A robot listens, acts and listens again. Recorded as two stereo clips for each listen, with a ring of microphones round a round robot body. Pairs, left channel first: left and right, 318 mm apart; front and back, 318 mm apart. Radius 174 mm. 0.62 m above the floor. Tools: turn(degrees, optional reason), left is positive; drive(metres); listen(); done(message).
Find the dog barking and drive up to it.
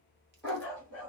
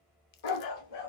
drive(metres=1.0)
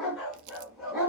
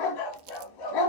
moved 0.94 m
drive(metres=1.0)
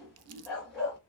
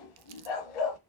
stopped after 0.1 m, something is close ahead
done("I am next to the dog barking.")